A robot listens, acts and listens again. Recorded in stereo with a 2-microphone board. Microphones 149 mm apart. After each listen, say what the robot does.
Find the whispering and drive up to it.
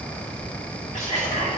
Turn 55° left.
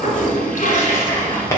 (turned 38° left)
Turn 25° left.
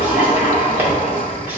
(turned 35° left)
Turn 10° right.
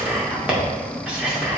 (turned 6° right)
Drive 1.0 m forward.
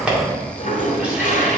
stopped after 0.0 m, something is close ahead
Turn 10° right.
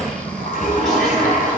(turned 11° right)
Keep listening.
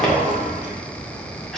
Keep listening.
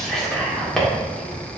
Blocked. The whispering is further on, straight ahead.